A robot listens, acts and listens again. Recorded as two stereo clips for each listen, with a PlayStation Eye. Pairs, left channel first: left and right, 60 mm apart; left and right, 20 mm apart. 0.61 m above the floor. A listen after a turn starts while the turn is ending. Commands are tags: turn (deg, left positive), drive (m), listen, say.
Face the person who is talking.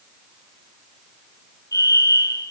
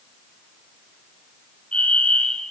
<listen/>
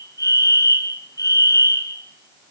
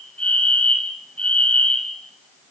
<listen/>
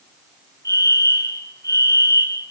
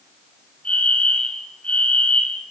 <say>I can't make out anyone speaking to turn to.</say>